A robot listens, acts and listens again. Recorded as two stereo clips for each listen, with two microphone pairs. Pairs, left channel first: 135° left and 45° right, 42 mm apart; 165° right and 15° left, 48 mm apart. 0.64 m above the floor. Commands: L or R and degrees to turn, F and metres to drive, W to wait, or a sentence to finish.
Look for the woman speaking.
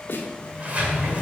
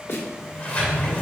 W
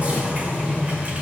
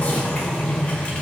W
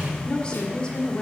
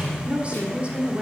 L70
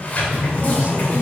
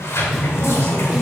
W
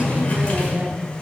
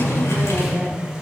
W
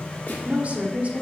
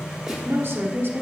Found it: a woman speaking, straight ahead.